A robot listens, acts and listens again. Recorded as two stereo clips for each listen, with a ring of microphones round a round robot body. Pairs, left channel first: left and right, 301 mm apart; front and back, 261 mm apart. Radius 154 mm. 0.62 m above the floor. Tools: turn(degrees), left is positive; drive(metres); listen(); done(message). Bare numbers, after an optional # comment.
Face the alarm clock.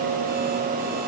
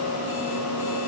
listen()
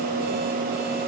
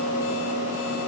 listen()
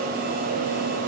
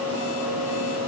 done("I can't make out an alarm clock.")